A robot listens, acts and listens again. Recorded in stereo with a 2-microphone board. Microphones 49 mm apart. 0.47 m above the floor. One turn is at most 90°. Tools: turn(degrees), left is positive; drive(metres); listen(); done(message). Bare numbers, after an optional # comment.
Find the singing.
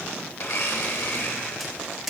listen()
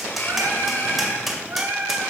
# The singing: about 55° right or 125° right.
turn(-55)
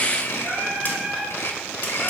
done("Found it: singing, straight ahead, 2 to 4 m away.")